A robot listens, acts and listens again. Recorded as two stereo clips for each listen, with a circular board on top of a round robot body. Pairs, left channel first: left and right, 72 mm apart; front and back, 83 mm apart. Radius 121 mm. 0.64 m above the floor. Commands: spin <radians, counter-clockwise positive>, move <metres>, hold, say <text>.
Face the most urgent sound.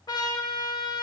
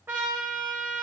hold
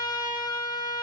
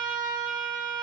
hold
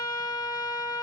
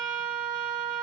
say I can't make out anything urgent, only a trumpet.